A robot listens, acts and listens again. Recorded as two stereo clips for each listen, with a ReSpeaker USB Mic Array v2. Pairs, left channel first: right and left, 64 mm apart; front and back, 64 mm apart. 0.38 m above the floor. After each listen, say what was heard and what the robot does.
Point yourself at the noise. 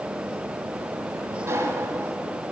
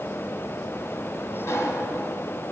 The sliding door: 40° left. Turn 40° left.
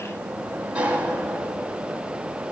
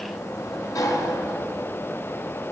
The sliding door is now 20° left. Turn 20° left.
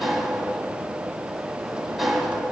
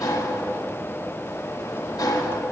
Found it: a sliding door, straight ahead.